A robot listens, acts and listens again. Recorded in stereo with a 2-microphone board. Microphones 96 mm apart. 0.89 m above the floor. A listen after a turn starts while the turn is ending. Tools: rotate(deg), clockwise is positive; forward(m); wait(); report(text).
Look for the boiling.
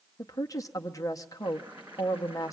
rotate(15)
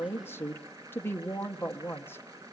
rotate(150)
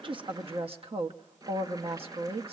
rotate(40)
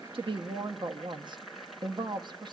report("Facing the boiling, 2 to 4 m away.")